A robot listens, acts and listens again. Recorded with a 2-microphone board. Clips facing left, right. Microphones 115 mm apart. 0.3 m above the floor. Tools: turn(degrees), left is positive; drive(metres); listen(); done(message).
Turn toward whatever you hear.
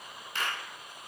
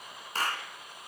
turn(degrees=-40)
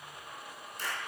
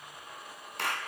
turn(degrees=-100)
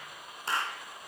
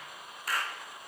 turn(degrees=30)
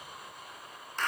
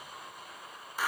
turn(degrees=-10)
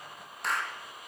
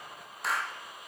done("Found it: a clap, straight ahead, 2 to 4 m away.")